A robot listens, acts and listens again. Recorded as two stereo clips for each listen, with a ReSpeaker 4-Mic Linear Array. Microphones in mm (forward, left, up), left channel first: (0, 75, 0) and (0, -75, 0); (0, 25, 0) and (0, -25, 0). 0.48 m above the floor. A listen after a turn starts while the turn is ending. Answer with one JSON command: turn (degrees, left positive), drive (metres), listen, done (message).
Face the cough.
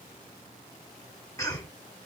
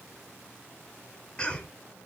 {"turn": 20}
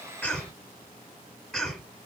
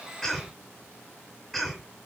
{"done": "Found it: a cough, straight ahead."}